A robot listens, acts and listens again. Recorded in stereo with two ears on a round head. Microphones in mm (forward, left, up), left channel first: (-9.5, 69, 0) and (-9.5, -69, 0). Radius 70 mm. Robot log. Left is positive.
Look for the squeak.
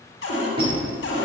note: The squeak: about 35° right or 145° right.
cmd yaw -35
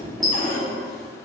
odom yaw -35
end: Found it: a squeak, straight ahead, 2 to 4 m away.